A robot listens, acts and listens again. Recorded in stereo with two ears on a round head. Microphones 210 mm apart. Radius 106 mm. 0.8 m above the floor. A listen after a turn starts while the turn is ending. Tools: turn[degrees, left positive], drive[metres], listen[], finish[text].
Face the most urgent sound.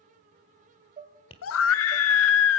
Thought: The scream: about 60° left or 120° left.
Action: turn[60]
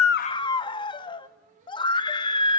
Thought: So it is at 20° left.
Action: turn[20]
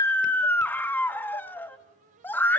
Thought: The scream is now 10° left.
Action: turn[10]
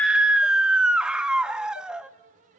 Action: finish[Facing the scream, under 1 m away.]